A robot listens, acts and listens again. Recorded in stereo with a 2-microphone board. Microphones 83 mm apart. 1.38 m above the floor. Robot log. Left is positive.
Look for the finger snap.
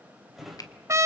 note: The finger snap: about 50° left or 130° left.
cmd yaw +50
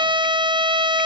cmd idle
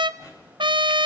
cmd idle
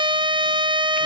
end: I heard a finger snap, but can't make it out now. It was about straight ahead or 80° left.